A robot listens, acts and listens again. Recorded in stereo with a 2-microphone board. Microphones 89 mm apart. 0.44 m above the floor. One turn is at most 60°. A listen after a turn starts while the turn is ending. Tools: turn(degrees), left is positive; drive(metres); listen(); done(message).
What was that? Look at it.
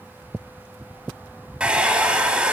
turn(degrees=-30)
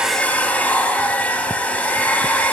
turn(degrees=15)
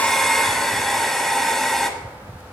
done("Facing the hair dryer, 1 to 2 m away.")